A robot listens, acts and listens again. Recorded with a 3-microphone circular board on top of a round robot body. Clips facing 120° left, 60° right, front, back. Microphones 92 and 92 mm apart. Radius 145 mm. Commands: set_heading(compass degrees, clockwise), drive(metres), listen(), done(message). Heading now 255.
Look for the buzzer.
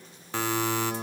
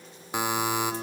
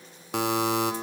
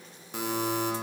set_heading(240)
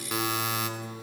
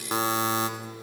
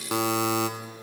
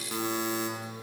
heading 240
done("Facing the buzzer.")